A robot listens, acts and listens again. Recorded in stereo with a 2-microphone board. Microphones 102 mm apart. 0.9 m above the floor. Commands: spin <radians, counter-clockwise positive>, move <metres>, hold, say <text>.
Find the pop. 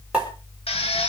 spin -0.52
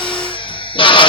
hold
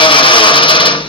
say I heard a pop, but can't make it out now. It was about 15° left or 135° right.